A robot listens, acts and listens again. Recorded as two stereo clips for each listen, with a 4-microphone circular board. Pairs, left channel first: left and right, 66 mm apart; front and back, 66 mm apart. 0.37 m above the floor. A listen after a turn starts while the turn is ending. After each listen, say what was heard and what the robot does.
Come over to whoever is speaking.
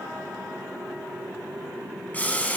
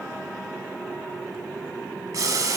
Keep listening.
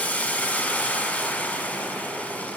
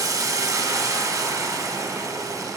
Keep listening.
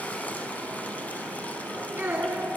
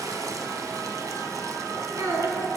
The child speaking: 145° right. Turn 145° right.
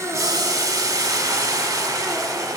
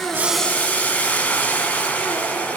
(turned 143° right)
Keep listening.
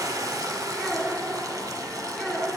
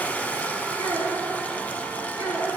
Drive 1.0 m forward.
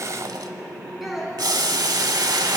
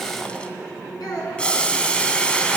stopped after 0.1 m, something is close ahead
Blocked. The child speaking is further on, straight ahead.